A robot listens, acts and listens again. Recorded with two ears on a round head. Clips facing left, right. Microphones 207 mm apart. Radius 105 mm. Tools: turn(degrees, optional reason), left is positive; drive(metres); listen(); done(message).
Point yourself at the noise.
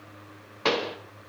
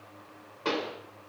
turn(degrees=90)
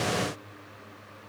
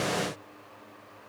done("I heard a pop from this way, but can't make it out now.")